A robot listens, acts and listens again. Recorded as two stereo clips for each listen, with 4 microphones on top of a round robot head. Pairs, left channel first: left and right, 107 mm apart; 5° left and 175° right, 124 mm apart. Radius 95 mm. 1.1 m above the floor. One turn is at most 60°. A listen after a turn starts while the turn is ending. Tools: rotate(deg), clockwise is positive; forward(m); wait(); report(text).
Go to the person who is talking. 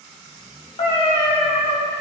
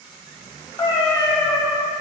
wait()
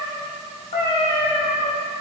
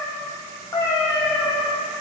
wait()
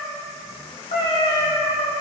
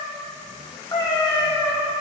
report("I can't make out anyone speaking to turn to.")